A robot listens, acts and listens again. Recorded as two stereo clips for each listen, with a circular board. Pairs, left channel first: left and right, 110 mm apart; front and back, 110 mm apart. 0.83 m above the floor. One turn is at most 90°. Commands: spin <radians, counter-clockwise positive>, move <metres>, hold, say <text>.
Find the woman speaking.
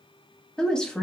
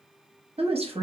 spin 1.57
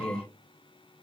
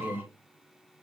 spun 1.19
spin 1.57
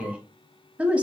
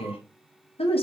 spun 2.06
spin -0.26
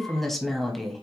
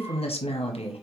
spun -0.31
say Facing the woman speaking.